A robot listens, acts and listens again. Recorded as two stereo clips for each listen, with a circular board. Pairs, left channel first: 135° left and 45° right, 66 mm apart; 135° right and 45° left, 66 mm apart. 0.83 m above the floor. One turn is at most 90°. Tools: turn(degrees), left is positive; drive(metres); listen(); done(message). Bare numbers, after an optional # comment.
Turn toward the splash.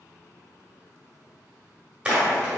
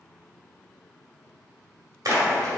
# The splash: 30° left.
turn(30)
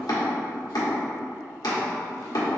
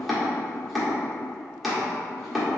done("Facing where the splash came from. I can't hear it now.")